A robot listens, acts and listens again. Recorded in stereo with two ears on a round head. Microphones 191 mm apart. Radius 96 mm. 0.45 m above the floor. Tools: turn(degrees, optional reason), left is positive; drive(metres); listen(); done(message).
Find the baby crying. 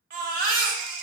turn(degrees=-40, reason="The baby crying: about 40° right or 140° right.")
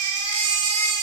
turn(degrees=-95, reason="So it is at 95° right.")
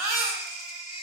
turn(degrees=-15, reason="The baby crying is now 15° right.")
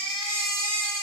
done("Facing the baby crying, under 1 m away.")